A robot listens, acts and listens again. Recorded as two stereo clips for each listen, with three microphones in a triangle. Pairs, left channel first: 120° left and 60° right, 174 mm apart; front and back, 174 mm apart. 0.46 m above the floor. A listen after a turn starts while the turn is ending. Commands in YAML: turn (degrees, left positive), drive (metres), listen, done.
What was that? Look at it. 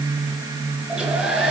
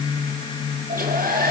turn: -145
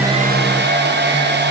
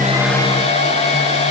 turn: -50
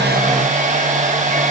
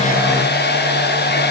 turn: -15
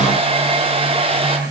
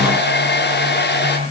done: "Facing the hair dryer."